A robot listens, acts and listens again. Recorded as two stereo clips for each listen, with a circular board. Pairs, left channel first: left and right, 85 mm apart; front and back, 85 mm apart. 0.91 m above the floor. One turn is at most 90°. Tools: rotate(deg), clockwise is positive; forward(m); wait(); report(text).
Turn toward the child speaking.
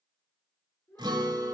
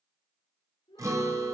rotate(-30)
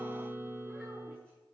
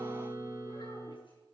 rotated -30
wait()
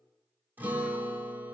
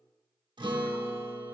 wait()
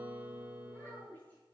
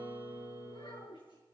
rotate(-20)
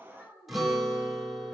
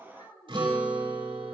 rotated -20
report("Facing the child speaking.")